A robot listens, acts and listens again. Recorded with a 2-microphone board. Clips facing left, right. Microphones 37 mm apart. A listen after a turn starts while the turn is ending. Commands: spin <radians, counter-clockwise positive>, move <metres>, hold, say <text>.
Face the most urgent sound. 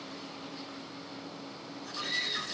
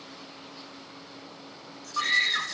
spin -1.05
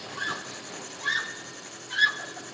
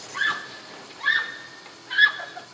spin -0.52
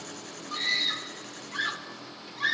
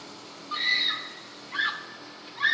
spin -0.26
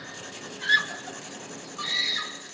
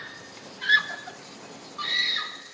say Facing the scream, 1 to 2 m away.